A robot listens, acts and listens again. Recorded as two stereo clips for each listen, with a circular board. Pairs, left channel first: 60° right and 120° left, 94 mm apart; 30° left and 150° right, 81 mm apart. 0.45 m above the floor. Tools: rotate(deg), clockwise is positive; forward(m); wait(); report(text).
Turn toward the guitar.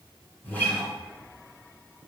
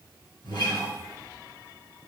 rotate(-10)
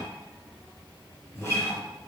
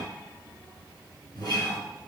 report("Found it: a guitar, straight ahead.")